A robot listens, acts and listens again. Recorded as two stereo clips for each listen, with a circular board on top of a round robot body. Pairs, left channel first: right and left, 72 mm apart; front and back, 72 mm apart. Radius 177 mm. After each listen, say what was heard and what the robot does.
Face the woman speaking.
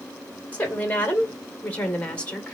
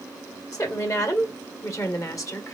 The woman speaking: 20° right. Turn 20° right.
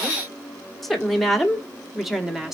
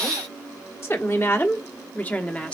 The woman speaking is now 20° left. Turn 20° left.
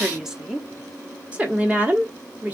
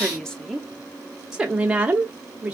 The woman speaking is now 130° left. Turn 130° left.
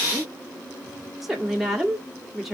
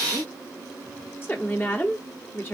The woman speaking is now 10° left. Turn 10° left.
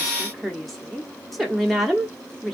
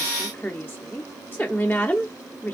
Facing the woman speaking, 1 to 2 m away.